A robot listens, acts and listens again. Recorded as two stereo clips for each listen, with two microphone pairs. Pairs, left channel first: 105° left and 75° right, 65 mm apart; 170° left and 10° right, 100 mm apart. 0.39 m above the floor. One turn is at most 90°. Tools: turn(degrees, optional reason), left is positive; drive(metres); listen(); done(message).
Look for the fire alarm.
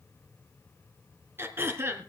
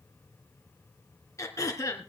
listen()
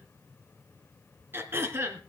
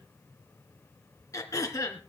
listen()
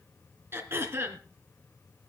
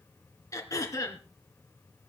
done("I can't make out a fire alarm, only throat clearing.")